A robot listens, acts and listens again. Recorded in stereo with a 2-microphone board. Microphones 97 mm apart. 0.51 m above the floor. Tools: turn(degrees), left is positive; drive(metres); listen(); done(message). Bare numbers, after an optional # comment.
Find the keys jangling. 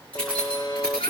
turn(30)
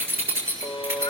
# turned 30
# So it is at 25° right.
turn(-25)
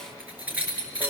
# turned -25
# The keys jangling is now 20° right.
turn(-20)
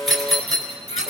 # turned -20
done("Found it: keys jangling, straight ahead.")